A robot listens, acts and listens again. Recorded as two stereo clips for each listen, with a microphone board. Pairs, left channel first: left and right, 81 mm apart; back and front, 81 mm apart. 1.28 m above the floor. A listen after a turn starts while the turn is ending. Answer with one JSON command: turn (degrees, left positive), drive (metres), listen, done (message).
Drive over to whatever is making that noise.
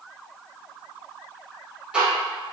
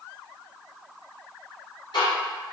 {"turn": -170}
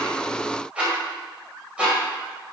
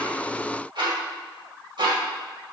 {"turn": -15}
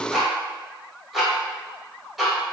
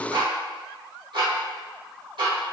{"drive": 1.0}
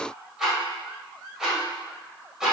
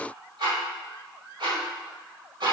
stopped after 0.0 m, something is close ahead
{"done": "Blocked. The ticking is further on, straight ahead."}